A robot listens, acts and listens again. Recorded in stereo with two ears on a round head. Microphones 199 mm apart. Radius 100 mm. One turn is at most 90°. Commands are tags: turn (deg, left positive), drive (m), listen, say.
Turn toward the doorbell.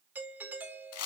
<turn deg="-30"/>
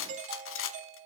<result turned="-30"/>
<turn deg="-90"/>
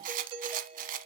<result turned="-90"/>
<turn deg="-25"/>
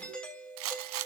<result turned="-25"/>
<say>Facing the doorbell.</say>